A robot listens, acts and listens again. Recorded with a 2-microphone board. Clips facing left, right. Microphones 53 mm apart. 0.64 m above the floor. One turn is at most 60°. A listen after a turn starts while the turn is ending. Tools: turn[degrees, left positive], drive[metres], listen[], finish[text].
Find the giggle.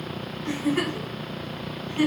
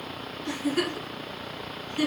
Thought: The giggle: about 30° left or 150° left.
Action: turn[30]
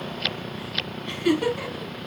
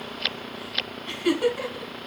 Action: finish[Found it: a giggle, straight ahead, 1 to 2 m away.]